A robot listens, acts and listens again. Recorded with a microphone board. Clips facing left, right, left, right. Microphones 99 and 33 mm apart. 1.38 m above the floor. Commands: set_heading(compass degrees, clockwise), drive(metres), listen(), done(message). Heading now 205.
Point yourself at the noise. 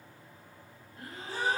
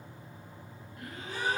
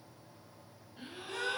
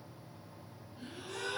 set_heading(175)
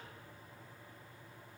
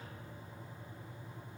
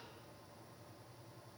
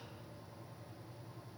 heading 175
listen()
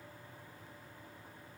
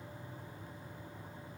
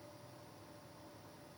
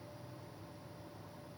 done("I heard a gasp, but can't make it out now. It was about straight ahead or 120° left.")